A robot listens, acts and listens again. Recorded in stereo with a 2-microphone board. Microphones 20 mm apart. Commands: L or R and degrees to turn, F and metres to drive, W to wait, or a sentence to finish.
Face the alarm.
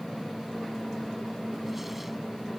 W
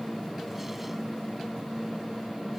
W
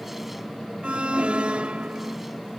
R90
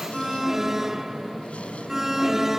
R15
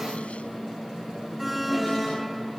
Found it: an alarm, straight ahead.